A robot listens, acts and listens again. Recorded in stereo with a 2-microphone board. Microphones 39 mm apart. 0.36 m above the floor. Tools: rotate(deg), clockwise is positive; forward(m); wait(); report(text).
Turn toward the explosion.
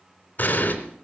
rotate(-40)
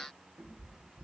wait()
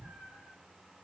report("I heard an explosion, but can't make it out now. It was about straight ahead or 100° left.")